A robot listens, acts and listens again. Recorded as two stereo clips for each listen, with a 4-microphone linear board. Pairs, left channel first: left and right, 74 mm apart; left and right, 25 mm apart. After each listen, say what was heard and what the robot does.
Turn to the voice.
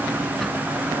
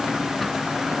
Keep listening.
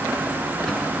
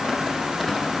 Keep listening.
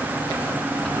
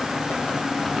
I can't make out anyone speaking.